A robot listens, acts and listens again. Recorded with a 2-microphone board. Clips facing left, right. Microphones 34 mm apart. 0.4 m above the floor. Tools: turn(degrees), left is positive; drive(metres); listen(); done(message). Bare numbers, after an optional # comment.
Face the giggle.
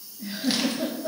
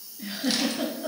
# The giggle: about 65° right or 115° right.
turn(-65)
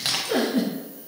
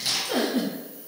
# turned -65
done("Facing the giggle.")